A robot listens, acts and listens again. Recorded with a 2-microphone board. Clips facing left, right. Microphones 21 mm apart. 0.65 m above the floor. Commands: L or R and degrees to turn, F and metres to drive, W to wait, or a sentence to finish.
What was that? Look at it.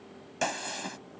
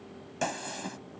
L25
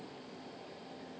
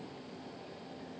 W
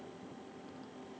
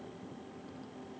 I heard a gunshot, but can't make it out now. It was about straight ahead or 130° left.